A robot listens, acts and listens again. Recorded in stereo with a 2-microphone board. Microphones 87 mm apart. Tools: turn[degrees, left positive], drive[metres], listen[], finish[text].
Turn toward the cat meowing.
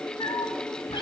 Thought: The cat meowing: about 60° left or 120° left.
Action: turn[60]
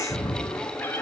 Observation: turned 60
Thought: So it is at 20° left.
Action: turn[20]
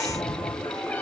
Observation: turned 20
Thought: The cat meowing is now 15° left.
Action: turn[15]
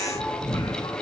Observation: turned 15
Thought: The cat meowing is now 10° left.
Action: turn[10]
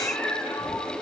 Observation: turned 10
Thought: The cat meowing is now 10° left.
Action: turn[10]
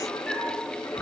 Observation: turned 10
Thought: The cat meowing is now 10° left.
Action: turn[10]
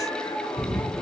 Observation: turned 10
Action: finish[Facing the cat meowing, 2 to 4 m away.]